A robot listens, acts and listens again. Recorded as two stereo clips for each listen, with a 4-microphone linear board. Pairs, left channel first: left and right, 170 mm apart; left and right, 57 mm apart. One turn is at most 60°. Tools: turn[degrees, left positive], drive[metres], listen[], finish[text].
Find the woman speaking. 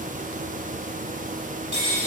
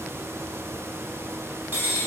Action: listen[]
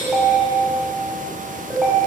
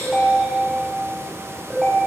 Action: listen[]
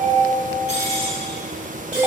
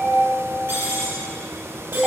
Action: finish[I can't make out a woman speaking to turn to.]